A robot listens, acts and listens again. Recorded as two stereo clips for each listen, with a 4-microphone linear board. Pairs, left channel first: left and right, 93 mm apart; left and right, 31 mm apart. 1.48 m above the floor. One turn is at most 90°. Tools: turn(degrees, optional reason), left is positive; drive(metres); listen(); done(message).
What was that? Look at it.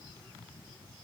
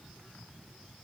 listen()
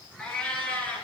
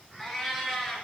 turn(degrees=20, reason="The cat meowing: about 20° left or 160° left.")
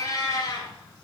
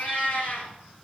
turn(degrees=90, reason="So it is at 135° left.")
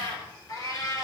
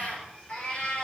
turn(degrees=40, reason="The cat meowing is now 40° left.")
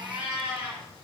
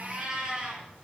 turn(degrees=-15, reason="The cat meowing is now 15° right.")
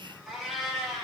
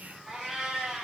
done("Found it: a cat meowing, straight ahead, over 4 m away.")